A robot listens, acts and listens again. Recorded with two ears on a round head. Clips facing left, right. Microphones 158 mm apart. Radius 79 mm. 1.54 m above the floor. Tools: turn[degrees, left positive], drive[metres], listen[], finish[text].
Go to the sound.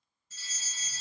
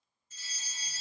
Thought: The fire alarm: about 60° left or 120° left.
Action: turn[60]
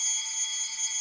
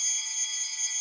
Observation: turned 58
Thought: So it is at 55° left.
Action: turn[55]
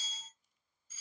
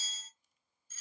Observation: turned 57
Action: drive[1.0]
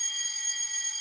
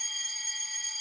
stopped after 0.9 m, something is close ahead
Thought: The fire alarm is now 10° right.
Action: turn[-10]
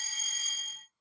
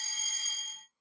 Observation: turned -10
Action: finish[Arrived at the fire alarm, straight ahead.]